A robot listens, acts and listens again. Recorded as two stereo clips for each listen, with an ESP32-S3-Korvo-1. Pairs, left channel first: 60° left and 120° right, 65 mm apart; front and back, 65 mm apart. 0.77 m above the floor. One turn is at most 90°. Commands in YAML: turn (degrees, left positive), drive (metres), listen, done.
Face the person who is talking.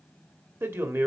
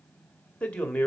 turn: -75
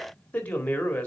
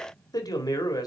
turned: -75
done: "Found it: a man speaking, straight ahead."